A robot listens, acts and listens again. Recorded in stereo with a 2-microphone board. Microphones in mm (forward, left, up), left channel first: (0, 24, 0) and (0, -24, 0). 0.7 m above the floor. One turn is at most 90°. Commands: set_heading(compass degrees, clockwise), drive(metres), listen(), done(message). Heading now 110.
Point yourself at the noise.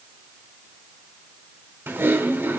set_heading(165)
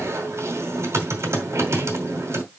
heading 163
set_heading(233)
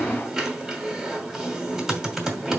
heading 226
done("Facing the typing on a keyboard.")